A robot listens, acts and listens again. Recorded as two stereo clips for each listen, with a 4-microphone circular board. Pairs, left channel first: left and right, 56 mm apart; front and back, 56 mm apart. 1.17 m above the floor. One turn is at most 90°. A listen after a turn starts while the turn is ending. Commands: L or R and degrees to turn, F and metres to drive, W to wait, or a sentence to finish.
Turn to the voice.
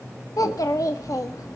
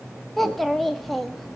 L90
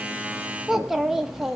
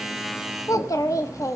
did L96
Facing the child speaking, 1 to 2 m away.